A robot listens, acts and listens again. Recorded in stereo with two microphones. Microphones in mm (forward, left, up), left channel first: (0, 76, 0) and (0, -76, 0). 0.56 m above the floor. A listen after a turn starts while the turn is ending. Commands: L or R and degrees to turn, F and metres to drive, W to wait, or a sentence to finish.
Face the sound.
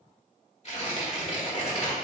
L45
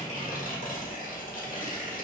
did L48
L80
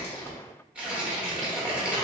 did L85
Found it: tearing paper, straight ahead, 1 to 2 m away.